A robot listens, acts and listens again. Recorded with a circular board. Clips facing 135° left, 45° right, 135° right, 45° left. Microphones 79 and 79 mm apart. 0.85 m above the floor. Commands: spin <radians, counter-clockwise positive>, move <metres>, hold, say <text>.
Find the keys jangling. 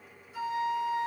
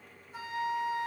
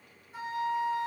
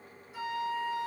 hold
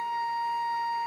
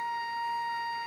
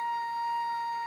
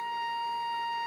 hold
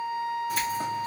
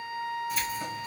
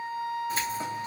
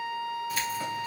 spin 2.88
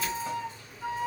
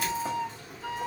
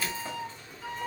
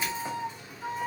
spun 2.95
spin -0.70
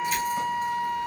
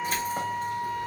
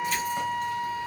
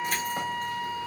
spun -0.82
say Facing the keys jangling.